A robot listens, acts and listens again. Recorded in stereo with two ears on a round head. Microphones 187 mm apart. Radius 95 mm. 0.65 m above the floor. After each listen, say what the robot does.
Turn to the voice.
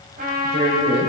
Turn 35° right.
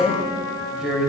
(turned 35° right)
Facing the woman speaking.